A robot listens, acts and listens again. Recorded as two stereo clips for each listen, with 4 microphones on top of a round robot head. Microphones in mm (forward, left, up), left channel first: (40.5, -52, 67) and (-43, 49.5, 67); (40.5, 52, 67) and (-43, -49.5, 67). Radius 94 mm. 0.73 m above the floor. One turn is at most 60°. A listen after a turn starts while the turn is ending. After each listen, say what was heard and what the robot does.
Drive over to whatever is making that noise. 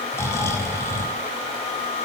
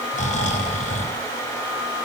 The snoring: 20° left. Turn 20° left.
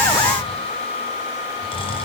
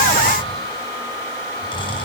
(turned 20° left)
Drive 1.0 m forward.
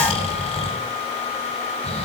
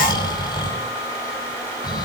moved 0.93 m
The snoring is now 10° right. Turn 10° right.
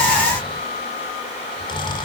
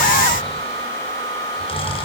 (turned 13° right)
Drive 1.0 m forward.
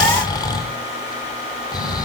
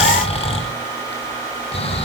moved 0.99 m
The snoring is now 10° left. Turn 10° left.
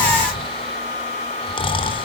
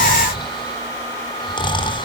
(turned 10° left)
Drive 1.0 m forward.
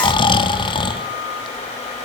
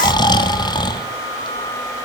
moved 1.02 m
Drive 1.0 m forward.
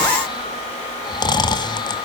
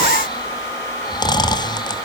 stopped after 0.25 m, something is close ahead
Arrived at the snoring, straight ahead.